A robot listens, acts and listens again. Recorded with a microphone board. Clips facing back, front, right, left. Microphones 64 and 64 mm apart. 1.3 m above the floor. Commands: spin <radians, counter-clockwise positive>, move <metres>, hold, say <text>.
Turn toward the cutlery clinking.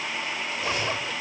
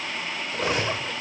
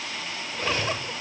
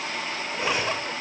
spin 0.26
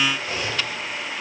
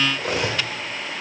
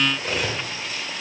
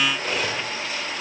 say Facing the cutlery clinking.